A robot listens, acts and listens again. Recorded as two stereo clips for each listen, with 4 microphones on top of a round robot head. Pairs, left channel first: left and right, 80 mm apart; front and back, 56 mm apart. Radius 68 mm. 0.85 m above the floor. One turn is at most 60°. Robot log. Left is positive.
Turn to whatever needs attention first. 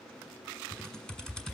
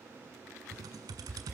cmd idle
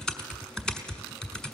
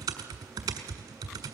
cmd idle
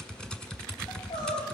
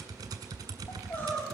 note: The crying: 50° left.
cmd yaw +50
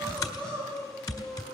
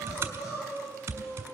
note: The crying is now 10° left.
cmd yaw +10
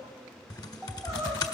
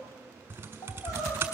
end: Facing the crying.